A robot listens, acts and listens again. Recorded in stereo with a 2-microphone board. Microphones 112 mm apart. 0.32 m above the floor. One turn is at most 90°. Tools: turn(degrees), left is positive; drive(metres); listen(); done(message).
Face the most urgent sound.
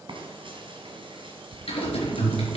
turn(degrees=-30)
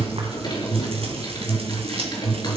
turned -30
turn(degrees=-90)
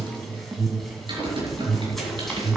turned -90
turn(degrees=-50)
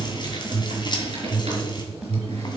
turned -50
done("Facing the alarm, 1 to 2 m away.")